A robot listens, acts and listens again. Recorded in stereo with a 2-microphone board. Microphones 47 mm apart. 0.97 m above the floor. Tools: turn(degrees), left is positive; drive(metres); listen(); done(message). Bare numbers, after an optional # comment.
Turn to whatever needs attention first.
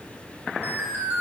# The alarm: about 45° right or 135° right.
turn(-45)
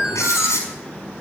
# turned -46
# So it is at 10° right.
turn(-10)
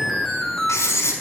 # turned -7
done("Facing the alarm.")